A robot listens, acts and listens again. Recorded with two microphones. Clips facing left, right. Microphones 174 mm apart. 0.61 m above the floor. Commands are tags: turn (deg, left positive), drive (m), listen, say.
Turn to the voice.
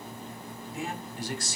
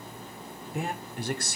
<turn deg="-60"/>
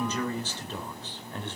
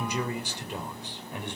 <turn deg="-15"/>
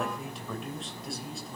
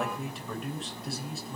<say>Found it: a man speaking, straight ahead, 2 to 4 m away.</say>